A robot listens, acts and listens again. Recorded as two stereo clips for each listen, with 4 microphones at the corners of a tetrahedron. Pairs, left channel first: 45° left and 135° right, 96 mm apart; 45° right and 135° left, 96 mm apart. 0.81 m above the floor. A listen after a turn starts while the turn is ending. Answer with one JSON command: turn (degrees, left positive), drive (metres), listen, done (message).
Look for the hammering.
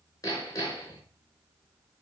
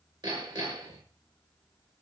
{"turn": 100}
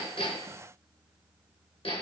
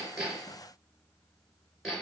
{"turn": 45}
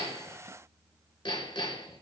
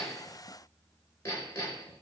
{"turn": 20}
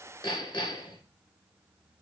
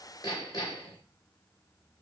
{"done": "Found it: hammering, straight ahead."}